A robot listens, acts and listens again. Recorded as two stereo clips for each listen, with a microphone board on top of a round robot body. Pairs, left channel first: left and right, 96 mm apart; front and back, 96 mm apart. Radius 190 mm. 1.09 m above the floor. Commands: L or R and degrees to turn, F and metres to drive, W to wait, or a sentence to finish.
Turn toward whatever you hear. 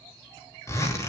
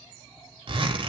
L150
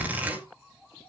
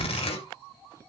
R15
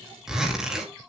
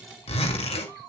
Found it: a zipper, straight ahead, 2 to 4 m away.